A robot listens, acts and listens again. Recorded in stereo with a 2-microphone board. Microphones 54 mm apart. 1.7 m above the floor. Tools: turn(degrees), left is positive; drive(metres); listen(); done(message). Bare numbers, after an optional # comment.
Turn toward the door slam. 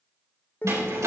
# The door slam: about 70° right or 110° right.
turn(-70)
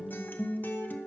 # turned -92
listen()
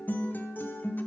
done("I heard a door slam, but can't make it out now. It was about 15° right or 20° left.")